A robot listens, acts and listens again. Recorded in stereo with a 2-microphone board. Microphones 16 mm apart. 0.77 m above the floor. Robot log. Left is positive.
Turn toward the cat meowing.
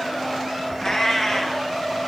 cmd yaw +30
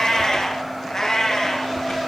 note: So it is at 155° left.
cmd yaw +155
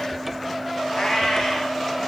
note: The cat meowing is now 60° left.
cmd yaw +60
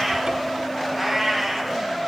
end: Facing the cat meowing.